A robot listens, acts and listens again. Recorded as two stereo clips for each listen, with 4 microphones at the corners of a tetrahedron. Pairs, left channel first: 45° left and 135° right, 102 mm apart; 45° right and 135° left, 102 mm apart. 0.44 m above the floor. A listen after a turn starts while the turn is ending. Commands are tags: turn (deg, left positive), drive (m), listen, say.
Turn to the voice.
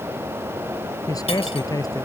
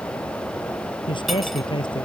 <turn deg="-10"/>
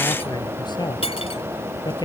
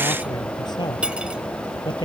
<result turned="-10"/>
<say>Facing the man speaking.</say>